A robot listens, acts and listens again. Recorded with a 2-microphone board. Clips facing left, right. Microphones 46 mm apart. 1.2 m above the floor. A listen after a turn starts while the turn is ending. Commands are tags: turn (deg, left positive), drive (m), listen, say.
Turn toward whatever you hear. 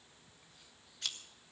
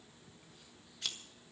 <turn deg="30"/>
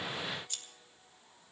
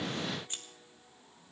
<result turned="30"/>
<turn deg="-30"/>
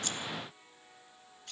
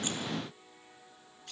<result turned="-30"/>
<say>Facing the scissors, 1 to 2 m away.</say>